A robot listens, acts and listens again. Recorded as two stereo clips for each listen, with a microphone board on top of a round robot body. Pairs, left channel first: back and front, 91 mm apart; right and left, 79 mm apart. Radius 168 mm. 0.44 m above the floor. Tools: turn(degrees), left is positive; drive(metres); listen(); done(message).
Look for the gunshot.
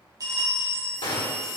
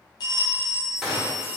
turn(degrees=175)
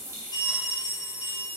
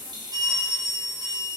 done("I heard a gunshot from this way, but can't make it out now.")